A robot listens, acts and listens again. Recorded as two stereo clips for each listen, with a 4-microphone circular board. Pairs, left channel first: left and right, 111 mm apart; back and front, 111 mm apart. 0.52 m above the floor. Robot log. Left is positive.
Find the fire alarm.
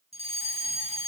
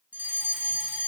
note: The fire alarm: 75° right.
cmd yaw -75
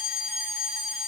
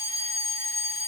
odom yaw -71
end: Found it: a fire alarm, straight ahead, over 4 m away.